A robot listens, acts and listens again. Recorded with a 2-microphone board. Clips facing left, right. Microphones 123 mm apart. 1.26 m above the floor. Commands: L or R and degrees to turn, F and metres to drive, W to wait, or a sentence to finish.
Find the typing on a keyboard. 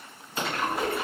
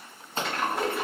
L30
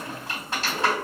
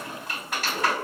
L145
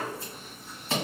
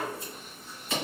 W
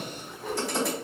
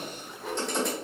Found it: typing on a keyboard, straight ahead.